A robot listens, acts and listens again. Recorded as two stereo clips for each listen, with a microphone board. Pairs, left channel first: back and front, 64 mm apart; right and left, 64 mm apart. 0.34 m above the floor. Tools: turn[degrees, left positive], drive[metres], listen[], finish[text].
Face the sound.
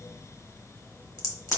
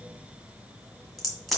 Thought: The crack: 175° right.
Action: turn[-175]
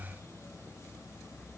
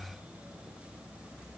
Action: finish[Facing where the crack came from. I can't hear it now.]